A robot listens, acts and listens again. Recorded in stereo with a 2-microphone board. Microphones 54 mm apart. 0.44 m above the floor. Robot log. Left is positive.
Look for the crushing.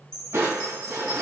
note: The crushing: about 60° right or 120° right.
cmd yaw -60
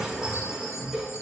end: Facing the crushing.